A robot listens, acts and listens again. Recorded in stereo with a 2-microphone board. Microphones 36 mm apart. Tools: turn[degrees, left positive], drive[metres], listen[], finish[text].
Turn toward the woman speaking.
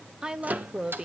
Thought: The woman speaking: about 25° right or 155° right.
Action: turn[-25]
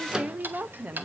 Thought: So it is at 130° right.
Action: turn[-130]
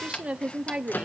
Thought: The woman speaking is now 35° right.
Action: turn[-35]
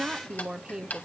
Thought: The woman speaking is now 20° right.
Action: turn[-20]
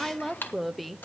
Action: finish[Facing the woman speaking.]